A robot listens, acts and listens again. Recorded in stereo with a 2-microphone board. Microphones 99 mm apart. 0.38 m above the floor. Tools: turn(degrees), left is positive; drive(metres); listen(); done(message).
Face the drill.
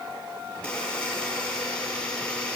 listen()
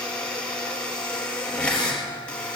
listen()
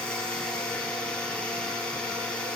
done("I can't make out a drill, only a buzzer.")